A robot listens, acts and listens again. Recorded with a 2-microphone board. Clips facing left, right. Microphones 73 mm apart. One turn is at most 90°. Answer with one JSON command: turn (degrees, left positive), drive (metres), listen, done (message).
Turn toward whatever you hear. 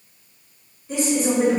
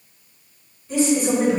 {"turn": 30}
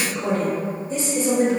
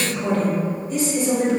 {"turn": 40}
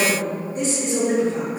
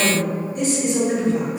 {"turn": 40}
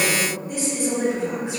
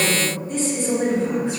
{"turn": 20}
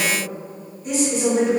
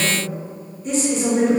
{"done": "Found it: a woman speaking, straight ahead, 2 to 4 m away."}